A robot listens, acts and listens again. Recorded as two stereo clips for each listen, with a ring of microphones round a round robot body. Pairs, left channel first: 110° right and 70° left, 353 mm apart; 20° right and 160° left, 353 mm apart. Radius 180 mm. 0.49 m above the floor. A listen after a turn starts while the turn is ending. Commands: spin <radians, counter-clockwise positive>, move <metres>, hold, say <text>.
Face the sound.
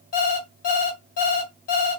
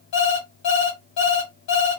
spin -1.05
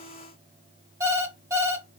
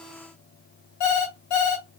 spin -0.26
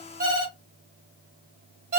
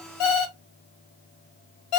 say Found it: an alarm clock, straight ahead, 1 to 2 m away.